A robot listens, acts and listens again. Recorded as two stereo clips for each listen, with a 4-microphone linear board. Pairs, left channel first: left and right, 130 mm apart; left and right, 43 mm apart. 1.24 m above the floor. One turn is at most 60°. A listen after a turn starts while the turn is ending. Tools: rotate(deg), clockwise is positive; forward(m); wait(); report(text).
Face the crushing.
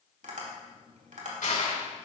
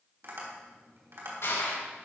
rotate(-60)
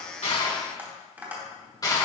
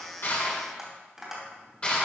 rotate(-30)
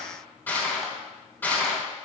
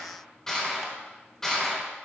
rotate(-15)
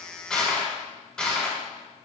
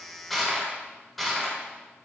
report("Found it: crushing, straight ahead.")